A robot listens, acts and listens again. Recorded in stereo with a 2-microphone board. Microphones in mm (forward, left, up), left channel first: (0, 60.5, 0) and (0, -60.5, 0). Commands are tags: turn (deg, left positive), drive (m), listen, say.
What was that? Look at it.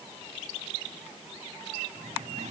<turn deg="-90"/>
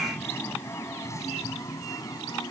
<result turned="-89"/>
<turn deg="30"/>
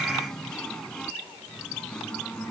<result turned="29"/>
<turn deg="10"/>
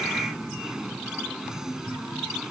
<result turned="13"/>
<say>Facing the singing.</say>